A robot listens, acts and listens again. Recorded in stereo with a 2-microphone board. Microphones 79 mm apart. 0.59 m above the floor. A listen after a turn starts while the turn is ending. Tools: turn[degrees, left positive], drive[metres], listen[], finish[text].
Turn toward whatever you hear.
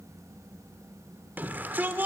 Thought: The shout: about 25° right or 155° right.
Action: turn[-25]
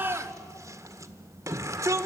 Thought: So it is at 130° right.
Action: turn[-130]
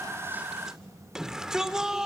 Thought: The shout is now 10° right.
Action: turn[-10]
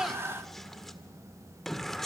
Action: finish[Found it: a shout, straight ahead.]